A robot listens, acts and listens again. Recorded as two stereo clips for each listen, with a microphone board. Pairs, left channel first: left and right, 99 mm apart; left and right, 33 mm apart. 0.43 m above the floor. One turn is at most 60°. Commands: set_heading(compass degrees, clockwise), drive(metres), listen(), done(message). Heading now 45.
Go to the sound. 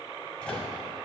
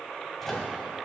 set_heading(15)
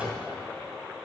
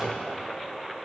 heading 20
set_heading(35)
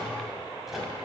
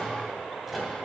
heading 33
drive(1.0)
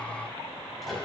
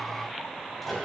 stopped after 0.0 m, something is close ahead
done("Blocked. The microwave is further on, straight ahead.")